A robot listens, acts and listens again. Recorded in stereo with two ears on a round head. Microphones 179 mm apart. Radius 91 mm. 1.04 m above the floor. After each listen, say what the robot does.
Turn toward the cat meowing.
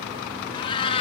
Turn 30° left.
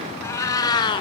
Turn 25° left.
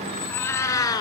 Turn 20° left.
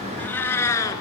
Turn 15° left.
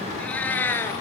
Turn 30° left.
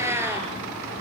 Turn 10° right.
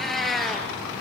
Facing the cat meowing, 2 to 4 m away.